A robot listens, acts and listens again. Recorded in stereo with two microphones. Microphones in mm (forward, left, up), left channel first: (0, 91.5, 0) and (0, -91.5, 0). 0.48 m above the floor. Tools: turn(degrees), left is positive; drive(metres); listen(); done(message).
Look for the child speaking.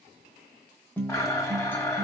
listen()
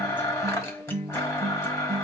listen()
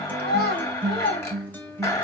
turn(degrees=65)
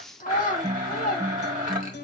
turn(degrees=50)
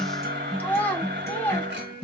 turn(degrees=10)
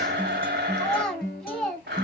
done("Found it: a child speaking, straight ahead.")